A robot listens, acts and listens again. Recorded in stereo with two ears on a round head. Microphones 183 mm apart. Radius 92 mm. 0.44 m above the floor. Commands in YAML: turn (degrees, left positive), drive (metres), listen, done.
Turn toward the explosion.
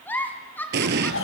turn: -55
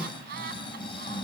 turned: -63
listen: true
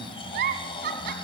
done: "I heard an explosion, but can't make it out now. It was about 5° left or 60° right."